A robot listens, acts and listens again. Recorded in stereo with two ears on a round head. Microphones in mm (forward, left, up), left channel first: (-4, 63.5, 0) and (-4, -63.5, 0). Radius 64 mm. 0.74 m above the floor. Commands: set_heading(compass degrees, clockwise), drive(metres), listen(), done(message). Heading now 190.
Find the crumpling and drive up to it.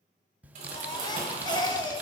set_heading(240)
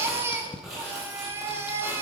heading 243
drive(1.0)
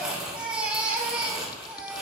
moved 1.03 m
drive(1.0)
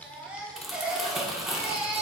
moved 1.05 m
drive(1.0)
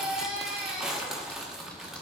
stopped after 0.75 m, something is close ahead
done("I am next to the crumpling.")